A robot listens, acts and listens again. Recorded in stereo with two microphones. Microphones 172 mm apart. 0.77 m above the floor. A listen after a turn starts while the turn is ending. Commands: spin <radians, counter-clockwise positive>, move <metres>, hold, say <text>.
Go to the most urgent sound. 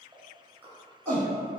spin 0.26
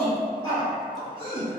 spin 2.62
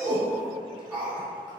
spin -0.17
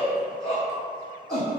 move 1.0
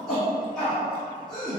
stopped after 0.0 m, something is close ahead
say Something is in my way. I am facing the shout but have not reached it.